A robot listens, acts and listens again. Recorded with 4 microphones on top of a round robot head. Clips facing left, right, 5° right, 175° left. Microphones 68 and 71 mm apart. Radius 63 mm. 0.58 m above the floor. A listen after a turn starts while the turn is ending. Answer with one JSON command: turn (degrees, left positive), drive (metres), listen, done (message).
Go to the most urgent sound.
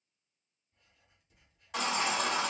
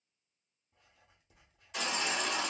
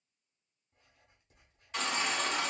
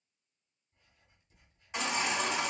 {"turn": 100}
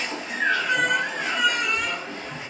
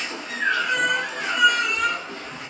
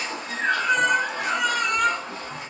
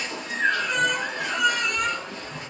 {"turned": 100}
{"drive": 1.0}
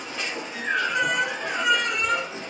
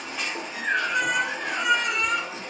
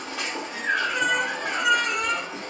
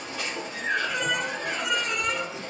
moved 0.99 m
{"drive": 1.0}
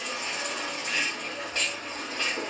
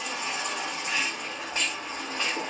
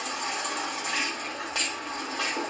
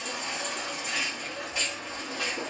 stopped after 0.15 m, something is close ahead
{"turn": -15}
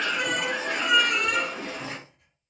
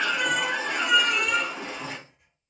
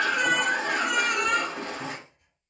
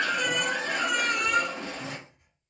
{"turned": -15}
{"turn": -10}
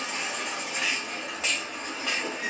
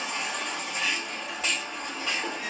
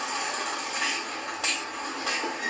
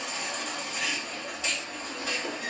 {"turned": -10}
{"done": "I am next to the baby crying."}